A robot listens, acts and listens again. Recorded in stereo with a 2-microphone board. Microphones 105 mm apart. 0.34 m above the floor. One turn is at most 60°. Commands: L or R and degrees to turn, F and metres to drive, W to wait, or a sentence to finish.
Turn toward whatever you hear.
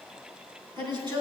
R45
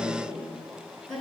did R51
Facing the woman speaking.